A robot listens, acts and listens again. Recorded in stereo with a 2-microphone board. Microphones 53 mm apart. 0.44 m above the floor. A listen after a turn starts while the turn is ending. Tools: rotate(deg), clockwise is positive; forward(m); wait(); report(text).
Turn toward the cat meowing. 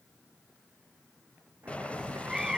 rotate(30)
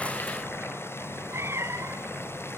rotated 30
rotate(115)
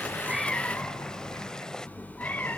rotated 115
rotate(-35)
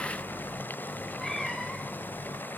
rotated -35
rotate(-10)
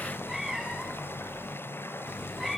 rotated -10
report("Facing the cat meowing.")